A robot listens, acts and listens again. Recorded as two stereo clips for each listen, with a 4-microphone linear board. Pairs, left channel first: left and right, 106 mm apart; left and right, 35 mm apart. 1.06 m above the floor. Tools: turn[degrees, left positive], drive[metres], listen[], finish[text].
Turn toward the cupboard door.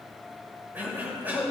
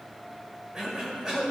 Action: listen[]
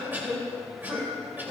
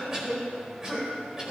Action: listen[]
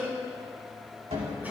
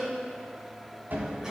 Action: turn[-90]
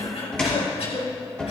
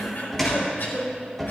Thought: So it is at 10° left.
Action: turn[10]
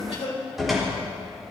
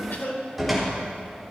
Action: finish[Found it: a cupboard door, straight ahead, 2 to 4 m away.]